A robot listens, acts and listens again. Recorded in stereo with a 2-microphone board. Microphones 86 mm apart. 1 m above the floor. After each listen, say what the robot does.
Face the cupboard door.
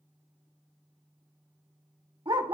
Keep listening.
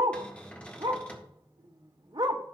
Turn 30° left.
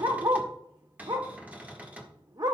Turn 15° right.
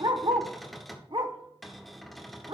Facing the cupboard door.